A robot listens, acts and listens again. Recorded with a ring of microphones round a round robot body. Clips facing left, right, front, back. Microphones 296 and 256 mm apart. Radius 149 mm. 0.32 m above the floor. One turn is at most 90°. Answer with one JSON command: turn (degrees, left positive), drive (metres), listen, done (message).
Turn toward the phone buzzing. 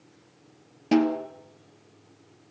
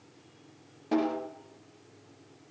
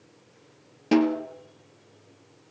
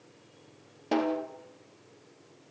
{"listen": true}
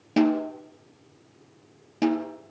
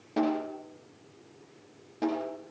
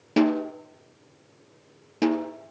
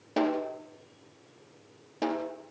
{"listen": true}
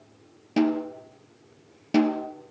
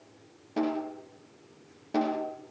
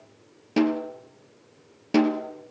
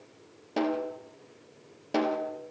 {"done": "I can't make out a phone buzzing to turn to."}